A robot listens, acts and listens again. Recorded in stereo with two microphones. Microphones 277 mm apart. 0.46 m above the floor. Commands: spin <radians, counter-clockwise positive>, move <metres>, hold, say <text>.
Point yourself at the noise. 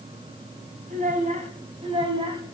spin -0.26
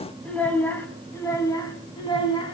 spin 0.35
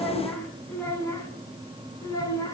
spin 0.17
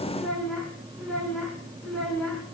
say Found it: a child speaking, straight ahead, 2 to 4 m away.